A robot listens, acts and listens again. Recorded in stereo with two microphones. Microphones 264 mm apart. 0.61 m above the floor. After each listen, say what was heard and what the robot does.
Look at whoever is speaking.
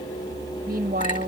The woman speaking: about 35° right or 145° right. Turn 35° right.
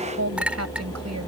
So it is at 105° right. Turn 105° right.
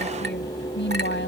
The woman speaking is now 45° left. Turn 45° left.
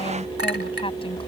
Keep listening.
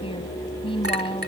The woman speaking is now 20° left. Turn 20° left.
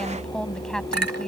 Found it: a woman speaking, straight ahead.